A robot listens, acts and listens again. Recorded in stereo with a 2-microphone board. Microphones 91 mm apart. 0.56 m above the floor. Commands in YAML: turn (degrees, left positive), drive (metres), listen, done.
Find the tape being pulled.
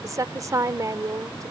listen: true
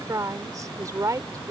listen: true
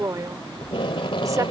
turn: 70
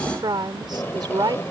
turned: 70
turn: 30
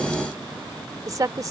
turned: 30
listen: true
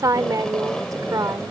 turn: 10
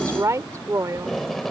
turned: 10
done: "Facing the tape being pulled."